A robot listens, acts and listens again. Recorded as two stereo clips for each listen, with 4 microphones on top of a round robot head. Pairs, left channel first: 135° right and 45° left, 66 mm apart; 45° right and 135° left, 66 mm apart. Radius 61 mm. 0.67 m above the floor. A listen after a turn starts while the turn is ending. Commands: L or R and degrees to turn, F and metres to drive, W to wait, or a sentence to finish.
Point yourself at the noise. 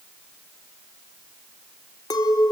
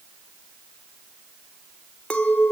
R115
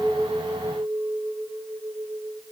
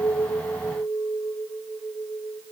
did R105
R10
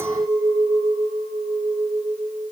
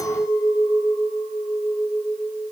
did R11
Found it: a clink, straight ahead.